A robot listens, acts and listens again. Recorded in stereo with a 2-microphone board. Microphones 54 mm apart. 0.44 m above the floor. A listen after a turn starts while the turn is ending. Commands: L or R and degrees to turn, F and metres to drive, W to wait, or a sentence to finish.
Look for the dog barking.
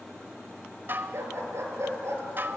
R60
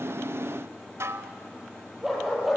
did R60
Found it: a dog barking, straight ahead.